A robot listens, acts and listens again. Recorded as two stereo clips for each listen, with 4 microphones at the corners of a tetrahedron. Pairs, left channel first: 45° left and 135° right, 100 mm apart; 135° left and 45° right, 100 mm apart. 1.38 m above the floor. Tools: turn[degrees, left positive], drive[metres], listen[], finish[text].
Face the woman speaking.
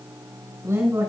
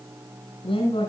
Thought: The woman speaking: 165° left.
Action: turn[165]
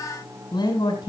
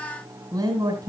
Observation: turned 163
Action: finish[Found it: a woman speaking, straight ahead, over 4 m away.]